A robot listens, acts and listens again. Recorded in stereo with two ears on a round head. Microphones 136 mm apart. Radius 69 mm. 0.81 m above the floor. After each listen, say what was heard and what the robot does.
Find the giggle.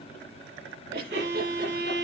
The giggle: about 60° right or 120° right. Turn 60° right.
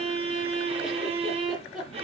Facing the giggle, over 4 m away.